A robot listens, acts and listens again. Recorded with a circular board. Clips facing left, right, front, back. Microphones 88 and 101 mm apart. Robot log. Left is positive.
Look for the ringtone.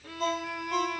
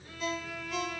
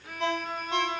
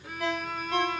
note: The ringtone: 60° left.
cmd yaw +60
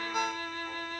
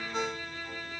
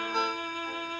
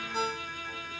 note: The ringtone is now 10° left.
cmd yaw +10
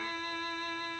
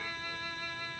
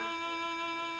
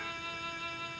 cmd idle
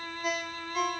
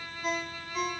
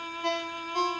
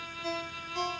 end: Facing the ringtone, under 1 m away.